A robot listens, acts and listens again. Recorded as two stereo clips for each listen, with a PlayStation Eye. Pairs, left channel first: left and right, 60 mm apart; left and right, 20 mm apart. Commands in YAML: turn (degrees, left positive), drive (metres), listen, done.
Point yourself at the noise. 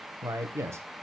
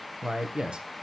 turn: -50
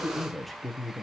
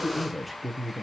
done: "Facing the man speaking."